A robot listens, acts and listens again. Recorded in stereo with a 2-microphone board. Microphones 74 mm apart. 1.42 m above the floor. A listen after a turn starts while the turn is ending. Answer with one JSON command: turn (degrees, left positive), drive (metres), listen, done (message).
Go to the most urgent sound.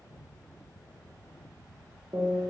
{"listen": true}
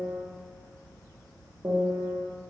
{"listen": true}
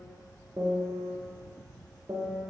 {"done": "I can't make out anything urgent to turn to."}